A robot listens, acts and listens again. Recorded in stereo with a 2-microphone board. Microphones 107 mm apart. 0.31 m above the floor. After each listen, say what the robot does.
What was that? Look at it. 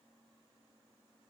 Keep listening.
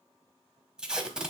Turn 30° right.
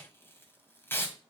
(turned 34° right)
Turn 25° left.
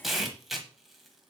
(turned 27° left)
Facing the tape being pulled.